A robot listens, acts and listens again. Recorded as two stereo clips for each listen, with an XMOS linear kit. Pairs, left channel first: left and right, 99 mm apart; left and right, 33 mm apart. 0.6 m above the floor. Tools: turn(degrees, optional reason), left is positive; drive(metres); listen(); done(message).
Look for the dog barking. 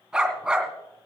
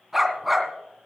turn(degrees=-30)
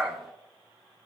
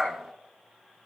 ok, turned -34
turn(degrees=-145, reason="So it is at 145° right.")
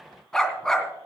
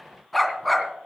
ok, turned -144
done("Found it: a dog barking, straight ahead.")